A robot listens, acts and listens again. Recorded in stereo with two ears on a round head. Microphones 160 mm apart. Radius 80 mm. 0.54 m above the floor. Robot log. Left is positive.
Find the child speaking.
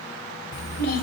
note: The child speaking: about 55° left or 125° left.
cmd yaw +55
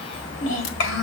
note: So it is at 75° left.
cmd yaw +75
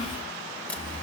note: The child speaking is now 35° left.
cmd yaw +35
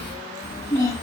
note: The child speaking is now 20° left.
cmd yaw +20
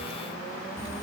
cmd idle
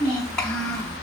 end: Found it: a child speaking, straight ahead, 2 to 4 m away.